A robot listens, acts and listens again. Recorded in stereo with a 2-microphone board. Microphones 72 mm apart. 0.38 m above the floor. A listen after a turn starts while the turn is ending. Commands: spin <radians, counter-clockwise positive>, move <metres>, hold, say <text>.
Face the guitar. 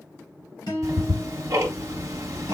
spin 1.57
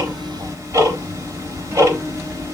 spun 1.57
hold
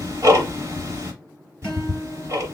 hold
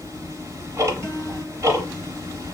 say Facing where the guitar came from. I can't hear it now.